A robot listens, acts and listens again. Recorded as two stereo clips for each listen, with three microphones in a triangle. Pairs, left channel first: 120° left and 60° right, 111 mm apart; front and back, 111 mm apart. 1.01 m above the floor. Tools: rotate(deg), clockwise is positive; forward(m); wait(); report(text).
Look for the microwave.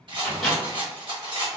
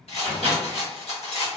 rotate(-30)
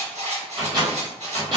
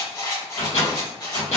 rotate(10)
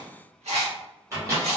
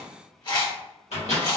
report("Facing the microwave, 1 to 2 m away.")